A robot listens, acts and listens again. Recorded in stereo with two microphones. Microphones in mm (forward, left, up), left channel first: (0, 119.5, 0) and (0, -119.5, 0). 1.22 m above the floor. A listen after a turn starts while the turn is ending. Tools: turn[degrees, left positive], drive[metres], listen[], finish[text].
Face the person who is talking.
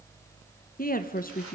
Thought: The woman speaking: about 35° left or 145° left.
Action: turn[35]
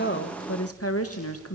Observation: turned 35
Thought: So it is at 105° left.
Action: turn[105]
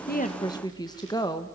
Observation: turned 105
Thought: The woman speaking is now 15° left.
Action: turn[15]
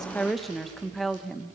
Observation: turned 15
Action: finish[Found it: a woman speaking, straight ahead, 1 to 2 m away.]